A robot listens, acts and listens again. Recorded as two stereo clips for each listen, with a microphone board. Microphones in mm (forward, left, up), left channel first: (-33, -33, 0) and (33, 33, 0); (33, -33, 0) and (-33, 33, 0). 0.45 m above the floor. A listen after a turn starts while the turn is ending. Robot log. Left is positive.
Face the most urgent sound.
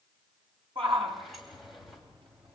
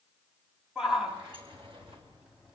note: The shout: 50° left.
cmd yaw +50
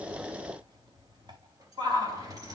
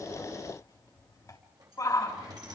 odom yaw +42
note: The shout is now 10° left.
cmd yaw +10
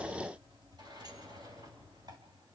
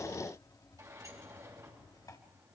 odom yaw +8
cmd idle
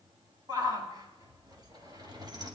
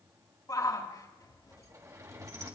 end: Facing the shout.